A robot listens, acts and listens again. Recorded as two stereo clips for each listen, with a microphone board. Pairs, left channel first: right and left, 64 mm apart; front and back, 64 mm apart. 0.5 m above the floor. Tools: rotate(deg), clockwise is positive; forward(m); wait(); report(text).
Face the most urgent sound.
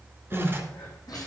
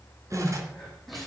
rotate(90)
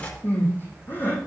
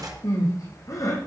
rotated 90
rotate(30)
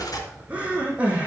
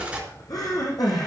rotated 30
rotate(-20)
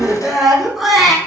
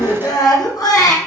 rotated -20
report("Facing the crying, over 4 m away.")